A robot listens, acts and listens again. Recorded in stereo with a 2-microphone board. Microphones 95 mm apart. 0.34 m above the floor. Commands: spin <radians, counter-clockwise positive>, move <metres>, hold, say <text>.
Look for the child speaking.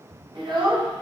spin -0.96
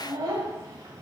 spin -0.79
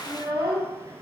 spin -0.61
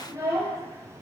spin -0.70
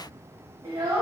spin -0.70
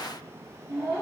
spin -0.26
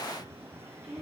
say Facing the child speaking.